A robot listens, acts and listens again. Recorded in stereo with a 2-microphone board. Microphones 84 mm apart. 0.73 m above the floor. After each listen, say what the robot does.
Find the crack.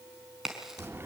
Turn 30° right.
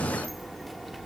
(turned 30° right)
Keep listening.
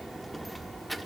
I heard a crack, but can't make it out now. It was about 25° left or 145° right.